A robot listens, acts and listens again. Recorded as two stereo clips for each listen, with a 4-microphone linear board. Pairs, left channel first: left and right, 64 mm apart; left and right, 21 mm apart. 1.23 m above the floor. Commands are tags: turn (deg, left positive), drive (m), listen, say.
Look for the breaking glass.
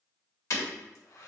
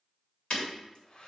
<turn deg="50"/>
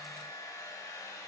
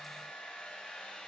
<listen/>
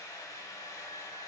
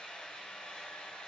<say>I heard breaking glass, but can't make it out now. It was about straight ahead or 80° left.</say>